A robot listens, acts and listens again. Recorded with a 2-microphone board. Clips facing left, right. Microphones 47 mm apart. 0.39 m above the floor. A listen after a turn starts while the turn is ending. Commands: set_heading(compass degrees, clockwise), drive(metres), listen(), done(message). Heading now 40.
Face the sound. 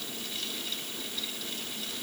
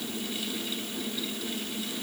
listen()
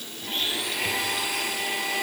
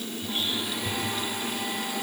set_heading(310)
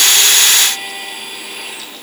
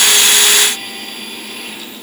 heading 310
done("Facing the blender, 2 to 4 m away.")